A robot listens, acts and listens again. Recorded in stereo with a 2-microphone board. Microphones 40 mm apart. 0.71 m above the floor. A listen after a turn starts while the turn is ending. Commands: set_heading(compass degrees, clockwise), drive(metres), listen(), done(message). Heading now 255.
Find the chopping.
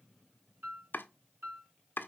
set_heading(195)
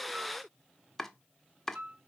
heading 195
set_heading(185)
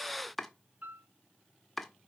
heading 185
done("Found it: chopping, straight ahead.")